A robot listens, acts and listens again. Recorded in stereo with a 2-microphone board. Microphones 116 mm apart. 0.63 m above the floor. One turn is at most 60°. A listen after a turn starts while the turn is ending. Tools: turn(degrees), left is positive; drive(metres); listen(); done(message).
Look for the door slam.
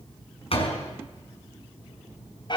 turn(degrees=55)
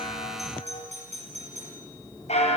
listen()
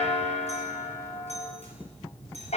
done("I heard a door slam, but can't make it out now. It was about straight ahead or 70° left.")